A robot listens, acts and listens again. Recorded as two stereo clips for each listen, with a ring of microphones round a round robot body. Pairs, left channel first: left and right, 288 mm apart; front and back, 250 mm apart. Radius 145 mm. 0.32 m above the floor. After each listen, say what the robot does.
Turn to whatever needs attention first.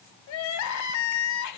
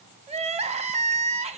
Turn 115° left.
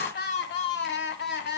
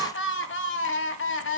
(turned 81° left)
Turn 35° left.
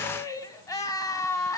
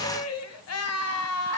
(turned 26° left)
Turn 10° left.
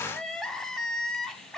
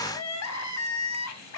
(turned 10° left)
Found it: crying, straight ahead, 1 to 2 m away.